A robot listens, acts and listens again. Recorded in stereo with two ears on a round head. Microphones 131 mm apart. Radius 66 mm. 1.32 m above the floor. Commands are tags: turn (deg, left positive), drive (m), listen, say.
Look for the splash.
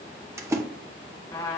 <turn deg="-20"/>
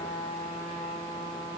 <listen/>
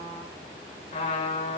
<say>I heard a splash, but can't make it out now. It was about straight ahead or 140° right.</say>